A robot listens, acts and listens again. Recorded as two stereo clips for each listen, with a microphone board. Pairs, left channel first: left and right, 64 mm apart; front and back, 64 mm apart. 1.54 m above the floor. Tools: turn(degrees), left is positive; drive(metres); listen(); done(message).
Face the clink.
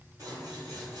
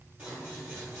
listen()
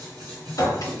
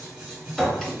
turn(degrees=85)
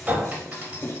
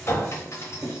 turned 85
turn(degrees=-35)
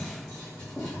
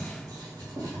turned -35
listen()
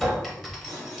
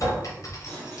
done("Facing the clink, under 1 m away.")